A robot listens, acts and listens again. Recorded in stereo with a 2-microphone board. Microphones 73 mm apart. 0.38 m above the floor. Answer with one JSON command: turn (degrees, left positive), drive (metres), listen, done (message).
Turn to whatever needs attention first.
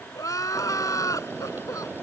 {"turn": 50}
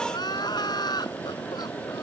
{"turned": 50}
{"turn": 80}
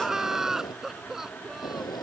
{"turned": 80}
{"done": "Facing the crying."}